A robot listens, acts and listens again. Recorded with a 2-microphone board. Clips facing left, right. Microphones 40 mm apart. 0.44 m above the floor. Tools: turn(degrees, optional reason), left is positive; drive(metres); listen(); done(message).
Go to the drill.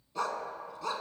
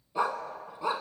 listen()
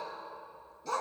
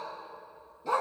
listen()
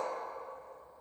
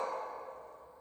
done("I can't make out a drill to turn to.")